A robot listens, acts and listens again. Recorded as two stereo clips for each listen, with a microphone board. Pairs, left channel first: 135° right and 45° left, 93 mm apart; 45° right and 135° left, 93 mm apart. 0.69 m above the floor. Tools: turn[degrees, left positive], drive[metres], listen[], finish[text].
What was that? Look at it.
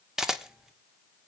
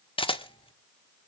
Thought: The camera shutter: 40° right.
Action: turn[-40]
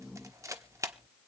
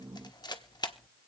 Thought: The camera shutter is now 10° right.
Action: turn[-10]
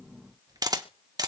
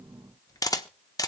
Action: finish[Facing the camera shutter, 1 to 2 m away.]